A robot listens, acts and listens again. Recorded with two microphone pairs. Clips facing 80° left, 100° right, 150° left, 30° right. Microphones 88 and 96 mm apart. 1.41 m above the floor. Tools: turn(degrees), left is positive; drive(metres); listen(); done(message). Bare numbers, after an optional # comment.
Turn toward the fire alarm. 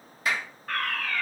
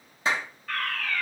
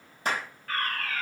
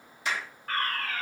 # The fire alarm: 20° left.
turn(20)
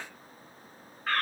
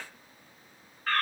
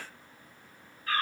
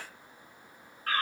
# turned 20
done("Facing the fire alarm, over 4 m away.")